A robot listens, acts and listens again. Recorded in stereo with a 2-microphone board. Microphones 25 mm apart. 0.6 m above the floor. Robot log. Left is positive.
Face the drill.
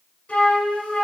cmd idle
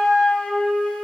cmd idle
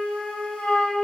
end: I can't make out a drill, only a flute.